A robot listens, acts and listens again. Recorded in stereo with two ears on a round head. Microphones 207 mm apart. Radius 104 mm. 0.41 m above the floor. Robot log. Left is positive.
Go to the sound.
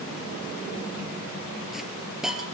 cmd yaw +30
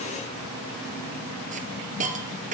note: So it is at 35° right.
cmd yaw -35
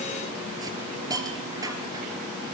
note: The hiss is now 15° right.
cmd yaw -15
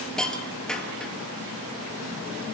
cmd fwd 1.0
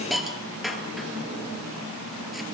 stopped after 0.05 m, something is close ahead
end: Blocked. The hiss is further on, straight ahead.